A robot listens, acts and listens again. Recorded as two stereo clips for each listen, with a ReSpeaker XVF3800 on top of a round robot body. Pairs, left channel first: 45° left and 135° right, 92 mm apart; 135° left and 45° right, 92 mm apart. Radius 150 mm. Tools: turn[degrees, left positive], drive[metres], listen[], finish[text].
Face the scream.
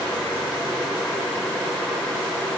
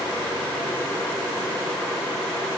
Action: listen[]
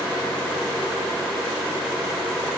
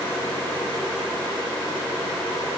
Action: listen[]
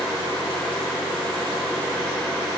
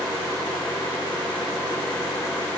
Action: finish[I can't make out a scream.]